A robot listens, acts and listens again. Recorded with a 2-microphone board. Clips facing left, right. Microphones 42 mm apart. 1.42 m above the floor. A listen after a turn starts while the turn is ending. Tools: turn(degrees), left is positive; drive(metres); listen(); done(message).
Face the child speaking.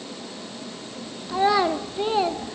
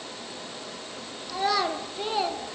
turn(degrees=30)
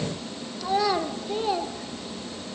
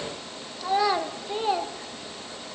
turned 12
turn(degrees=-15)
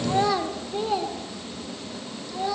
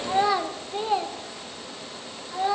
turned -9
turn(degrees=-25)
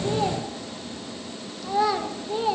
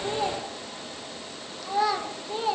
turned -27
done("Found it: a child speaking, straight ahead.")